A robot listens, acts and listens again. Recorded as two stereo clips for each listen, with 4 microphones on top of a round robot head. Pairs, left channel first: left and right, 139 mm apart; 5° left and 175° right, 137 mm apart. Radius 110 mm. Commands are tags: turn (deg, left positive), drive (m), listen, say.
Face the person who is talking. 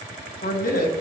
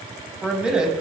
<turn deg="100"/>
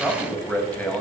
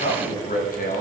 <turn deg="10"/>
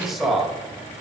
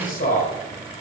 <say>Facing the man speaking, 2 to 4 m away.</say>